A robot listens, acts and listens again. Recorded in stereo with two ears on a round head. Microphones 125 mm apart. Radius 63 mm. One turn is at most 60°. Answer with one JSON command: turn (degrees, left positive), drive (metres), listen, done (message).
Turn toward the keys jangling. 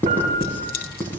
{"turn": 60}
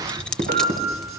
{"done": "Facing the keys jangling."}